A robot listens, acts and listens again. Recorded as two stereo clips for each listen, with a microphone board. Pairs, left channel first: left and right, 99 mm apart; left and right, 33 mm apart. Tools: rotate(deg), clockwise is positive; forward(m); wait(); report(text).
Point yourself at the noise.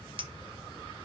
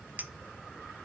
rotate(55)
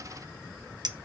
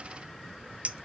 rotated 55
rotate(50)
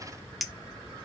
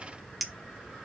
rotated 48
report("Found it: a clink, straight ahead.")